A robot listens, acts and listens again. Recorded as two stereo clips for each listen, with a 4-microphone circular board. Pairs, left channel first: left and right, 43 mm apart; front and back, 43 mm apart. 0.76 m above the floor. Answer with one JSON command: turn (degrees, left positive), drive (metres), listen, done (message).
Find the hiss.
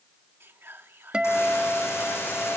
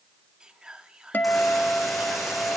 {"turn": 90}
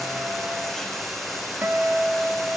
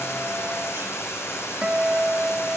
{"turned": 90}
{"done": "Found it: a hiss, straight ahead, over 4 m away."}